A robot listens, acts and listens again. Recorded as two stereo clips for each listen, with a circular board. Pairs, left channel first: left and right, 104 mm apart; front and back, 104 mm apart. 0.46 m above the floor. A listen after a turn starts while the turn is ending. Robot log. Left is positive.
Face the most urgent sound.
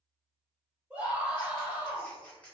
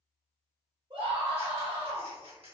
note: The scream: 165° right.
cmd yaw -165
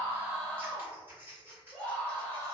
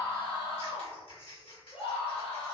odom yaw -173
note: The scream is now 10° left.
cmd yaw +10
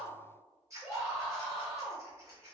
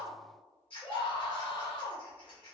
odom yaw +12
end: Facing the scream, 1 to 2 m away.